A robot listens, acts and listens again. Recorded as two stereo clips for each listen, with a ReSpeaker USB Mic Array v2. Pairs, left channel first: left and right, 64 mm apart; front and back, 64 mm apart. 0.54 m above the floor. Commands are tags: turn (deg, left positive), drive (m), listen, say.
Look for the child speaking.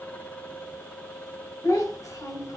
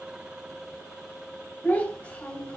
<turn deg="70"/>
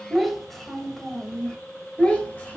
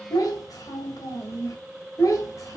<turn deg="25"/>
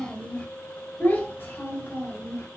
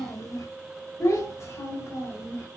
<turn deg="40"/>
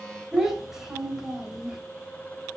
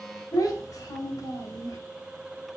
<say>Facing the child speaking, 2 to 4 m away.</say>